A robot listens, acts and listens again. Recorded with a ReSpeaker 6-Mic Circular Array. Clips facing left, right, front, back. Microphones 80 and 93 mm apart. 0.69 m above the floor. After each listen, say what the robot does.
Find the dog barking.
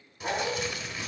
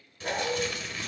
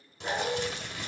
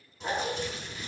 Turn 105° left.
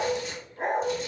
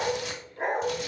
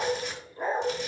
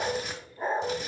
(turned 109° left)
Turn 10° right.
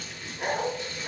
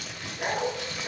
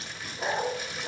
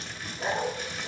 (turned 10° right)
Facing the dog barking.